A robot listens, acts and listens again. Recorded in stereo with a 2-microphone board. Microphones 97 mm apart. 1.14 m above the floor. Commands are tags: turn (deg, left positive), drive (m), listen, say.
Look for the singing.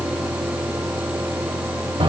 <listen/>
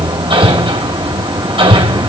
<listen/>
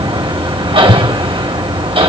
<say>I can't make out singing to turn to.</say>